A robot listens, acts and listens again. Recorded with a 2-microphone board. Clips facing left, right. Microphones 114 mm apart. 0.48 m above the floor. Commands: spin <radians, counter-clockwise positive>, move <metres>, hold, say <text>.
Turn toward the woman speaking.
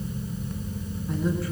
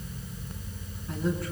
spin 0.52
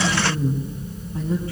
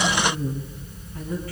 spin 2.62
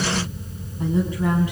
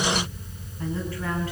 spin 0.35
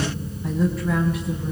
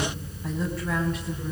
say Found it: a woman speaking, straight ahead, over 4 m away.